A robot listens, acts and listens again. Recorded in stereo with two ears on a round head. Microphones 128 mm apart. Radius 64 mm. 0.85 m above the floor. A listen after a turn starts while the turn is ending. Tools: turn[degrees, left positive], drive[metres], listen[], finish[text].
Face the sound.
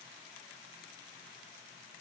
Action: listen[]
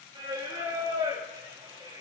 Thought: The singing: about 35° right or 145° right.
Action: turn[-35]
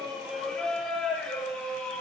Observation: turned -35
Action: finish[Facing the singing.]